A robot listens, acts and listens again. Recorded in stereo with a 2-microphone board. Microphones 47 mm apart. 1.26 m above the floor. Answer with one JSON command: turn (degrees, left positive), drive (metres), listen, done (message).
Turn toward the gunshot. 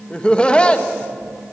{"listen": true}
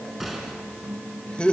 {"turn": -30}
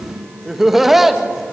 {"listen": true}
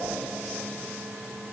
{"done": "I heard a gunshot, but can't make it out now. It was about 25° left or 145° right."}